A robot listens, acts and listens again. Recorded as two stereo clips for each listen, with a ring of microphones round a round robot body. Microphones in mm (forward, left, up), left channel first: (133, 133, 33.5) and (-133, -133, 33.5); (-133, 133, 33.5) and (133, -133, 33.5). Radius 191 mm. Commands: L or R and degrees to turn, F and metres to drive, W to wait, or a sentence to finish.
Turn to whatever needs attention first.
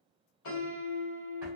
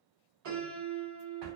W
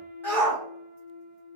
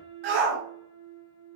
R40
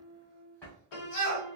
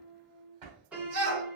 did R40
Facing the shout, 1 to 2 m away.